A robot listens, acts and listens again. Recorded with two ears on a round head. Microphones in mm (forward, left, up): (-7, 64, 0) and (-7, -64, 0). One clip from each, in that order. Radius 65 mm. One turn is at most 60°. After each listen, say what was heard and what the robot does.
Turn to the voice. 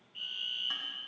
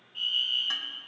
Keep listening.
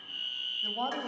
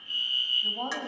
The woman speaking: about 45° left or 135° left. Turn 45° left.
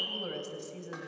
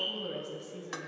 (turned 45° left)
So it is at 80° left. Turn 60° left.
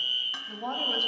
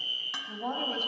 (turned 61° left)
The woman speaking is now 20° left. Turn 20° left.
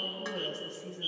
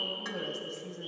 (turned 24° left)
Found it: a woman speaking, straight ahead.